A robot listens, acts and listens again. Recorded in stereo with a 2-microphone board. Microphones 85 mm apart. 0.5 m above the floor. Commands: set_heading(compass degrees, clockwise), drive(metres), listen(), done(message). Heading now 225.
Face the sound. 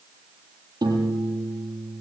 set_heading(270)
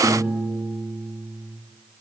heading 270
done("Found it: a piano, straight ahead, over 4 m away.")